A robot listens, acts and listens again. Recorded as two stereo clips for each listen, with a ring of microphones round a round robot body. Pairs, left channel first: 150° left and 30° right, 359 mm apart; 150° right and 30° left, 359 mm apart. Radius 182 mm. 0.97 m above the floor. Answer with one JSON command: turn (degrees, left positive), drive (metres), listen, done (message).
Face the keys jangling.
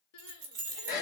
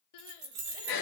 {"turn": -25}
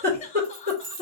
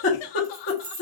{"turn": -15}
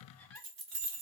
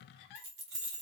{"turn": -20}
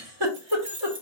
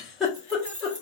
{"turn": -10}
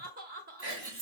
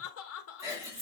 {"turn": -10}
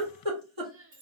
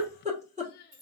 {"turn": -10}
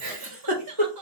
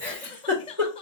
{"listen": true}
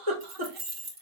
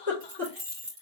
{"done": "Facing the keys jangling."}